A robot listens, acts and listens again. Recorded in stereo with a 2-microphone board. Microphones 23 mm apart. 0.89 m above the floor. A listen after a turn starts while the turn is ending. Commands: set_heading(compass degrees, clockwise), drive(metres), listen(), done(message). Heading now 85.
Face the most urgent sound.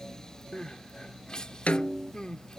set_heading(40)
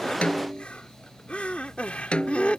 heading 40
set_heading(310)
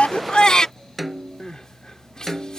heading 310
set_heading(280)
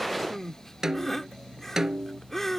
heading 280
set_heading(270)
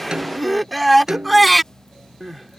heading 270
done("Facing the crying.")